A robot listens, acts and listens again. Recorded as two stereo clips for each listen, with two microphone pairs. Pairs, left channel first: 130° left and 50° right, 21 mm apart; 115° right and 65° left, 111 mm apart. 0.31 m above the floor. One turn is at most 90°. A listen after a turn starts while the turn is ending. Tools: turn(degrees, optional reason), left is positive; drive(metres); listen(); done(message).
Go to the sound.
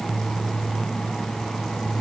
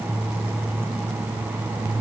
listen()
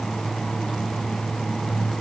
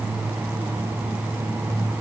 listen()
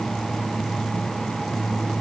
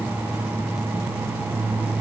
done("I can't make out anything to turn to.")